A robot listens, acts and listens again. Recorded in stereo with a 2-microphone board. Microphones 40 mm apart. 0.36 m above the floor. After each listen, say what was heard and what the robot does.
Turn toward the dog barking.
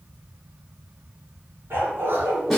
Turn 90° right.
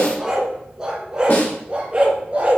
So it is at 35° right. Turn 35° right.
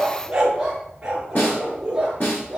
The dog barking is now 20° right. Turn 20° right.
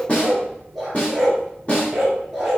Found it: a dog barking, straight ahead, 2 to 4 m away.